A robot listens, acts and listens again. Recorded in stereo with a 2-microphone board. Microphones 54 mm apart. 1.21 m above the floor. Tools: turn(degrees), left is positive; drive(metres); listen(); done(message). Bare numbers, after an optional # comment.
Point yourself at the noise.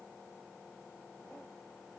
listen()
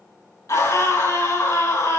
# The scream: about 75° left or 105° left.
turn(75)
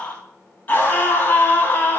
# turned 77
# So it is at 30° left.
turn(30)
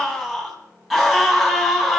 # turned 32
done("Found it: a scream, straight ahead, over 4 m away.")